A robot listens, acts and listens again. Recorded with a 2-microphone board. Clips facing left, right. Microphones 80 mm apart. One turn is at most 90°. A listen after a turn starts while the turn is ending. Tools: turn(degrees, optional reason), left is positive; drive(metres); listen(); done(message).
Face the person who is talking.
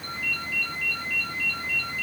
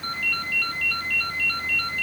listen()
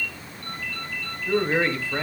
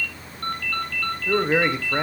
turn(degrees=-20, reason="The man speaking: about 20° right or 160° right.")
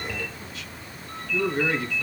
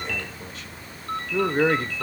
turn(degrees=-90, reason="So it is at 140° right.")
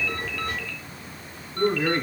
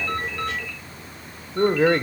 turn(degrees=-85, reason="The man speaking is now 85° right.")
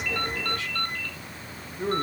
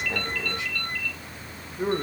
turn(degrees=-20, reason="The man speaking is now 20° right.")
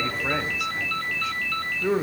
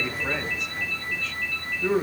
turn(degrees=10, reason="The man speaking is now 10° left.")
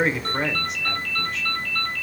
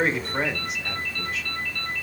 done("Found it: a man speaking, straight ahead.")